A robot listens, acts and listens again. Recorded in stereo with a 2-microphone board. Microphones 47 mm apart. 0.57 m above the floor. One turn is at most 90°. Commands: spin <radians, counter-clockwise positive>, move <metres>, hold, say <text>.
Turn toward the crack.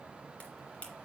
spin 0.52
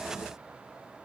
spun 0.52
hold
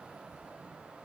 say I heard a crack, but can't make it out now. It was about straight ahead or 120° left.